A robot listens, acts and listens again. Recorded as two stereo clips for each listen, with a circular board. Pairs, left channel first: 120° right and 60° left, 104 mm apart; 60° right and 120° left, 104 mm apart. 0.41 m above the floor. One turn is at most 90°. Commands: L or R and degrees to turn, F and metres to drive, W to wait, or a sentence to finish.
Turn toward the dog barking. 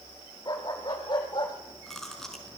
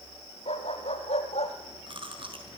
R75
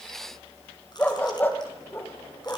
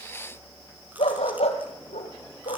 R50
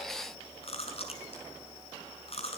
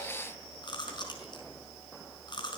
W
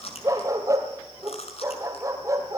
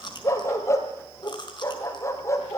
Facing the dog barking.